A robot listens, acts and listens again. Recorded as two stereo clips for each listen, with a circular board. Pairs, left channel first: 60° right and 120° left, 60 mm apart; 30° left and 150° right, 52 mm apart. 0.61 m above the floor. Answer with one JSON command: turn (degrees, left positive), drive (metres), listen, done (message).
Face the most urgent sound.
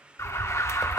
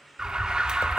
{"turn": -75}
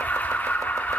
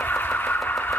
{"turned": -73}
{"done": "Facing the alarm."}